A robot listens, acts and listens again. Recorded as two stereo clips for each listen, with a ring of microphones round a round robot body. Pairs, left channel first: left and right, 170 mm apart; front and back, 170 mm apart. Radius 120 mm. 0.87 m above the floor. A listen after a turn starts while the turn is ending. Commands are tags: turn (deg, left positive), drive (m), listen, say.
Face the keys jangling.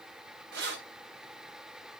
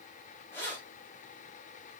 <turn deg="-80"/>
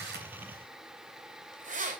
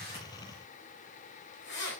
<turn deg="-50"/>
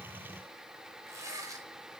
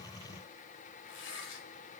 <turn deg="-20"/>
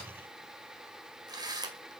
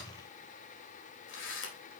<turn deg="-25"/>
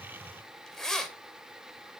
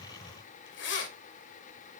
<say>Facing the keys jangling, 2 to 4 m away.</say>